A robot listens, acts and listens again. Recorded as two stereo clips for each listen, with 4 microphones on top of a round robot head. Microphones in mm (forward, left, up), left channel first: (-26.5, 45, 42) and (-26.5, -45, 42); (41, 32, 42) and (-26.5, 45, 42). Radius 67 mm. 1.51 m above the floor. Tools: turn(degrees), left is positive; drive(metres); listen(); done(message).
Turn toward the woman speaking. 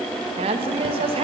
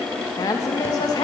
turn(degrees=-55)
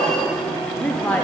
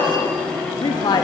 turn(degrees=10)
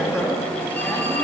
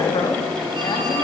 listen()
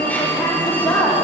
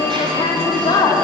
turn(degrees=15)
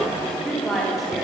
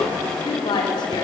done("Found it: a woman speaking, straight ahead, over 4 m away.")